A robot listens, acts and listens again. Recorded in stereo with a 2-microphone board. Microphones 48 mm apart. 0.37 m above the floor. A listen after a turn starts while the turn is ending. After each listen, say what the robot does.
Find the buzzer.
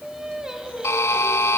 Turn 90° left.
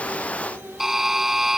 Found it: a buzzer, straight ahead, under 1 m away.